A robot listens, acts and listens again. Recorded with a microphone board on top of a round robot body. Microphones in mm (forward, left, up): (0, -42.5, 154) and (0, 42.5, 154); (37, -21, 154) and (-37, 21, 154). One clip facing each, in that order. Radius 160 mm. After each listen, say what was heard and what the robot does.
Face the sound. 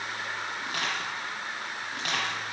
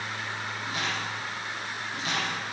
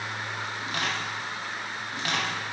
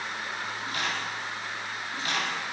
The crushing: 55° right. Turn 55° right.
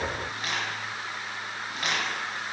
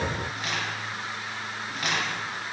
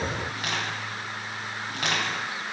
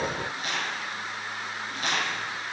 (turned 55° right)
Found it: crushing, straight ahead, 1 to 2 m away.